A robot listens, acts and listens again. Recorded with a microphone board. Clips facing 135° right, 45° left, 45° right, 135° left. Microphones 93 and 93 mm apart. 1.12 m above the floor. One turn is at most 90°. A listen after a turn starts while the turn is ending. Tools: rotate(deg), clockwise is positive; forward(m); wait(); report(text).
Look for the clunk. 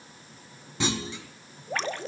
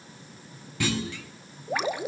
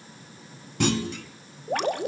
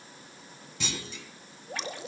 rotate(70)
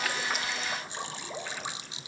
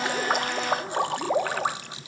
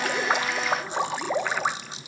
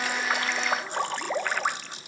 report("I heard a clunk from this way, but can't make it out now.")